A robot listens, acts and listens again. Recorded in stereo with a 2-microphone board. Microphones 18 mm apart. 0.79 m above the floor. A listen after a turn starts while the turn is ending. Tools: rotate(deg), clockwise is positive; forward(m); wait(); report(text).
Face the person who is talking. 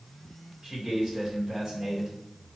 rotate(35)
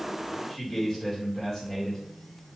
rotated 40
report("Facing the man speaking, 2 to 4 m away.")